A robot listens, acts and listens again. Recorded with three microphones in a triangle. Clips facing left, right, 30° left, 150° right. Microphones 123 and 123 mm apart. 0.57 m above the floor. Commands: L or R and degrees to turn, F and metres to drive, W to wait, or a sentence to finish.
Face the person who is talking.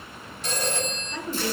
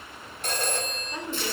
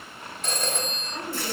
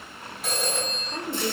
R160
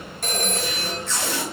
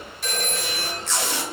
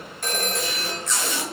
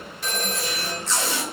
R35
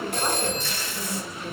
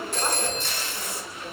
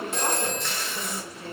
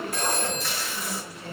Facing the woman speaking.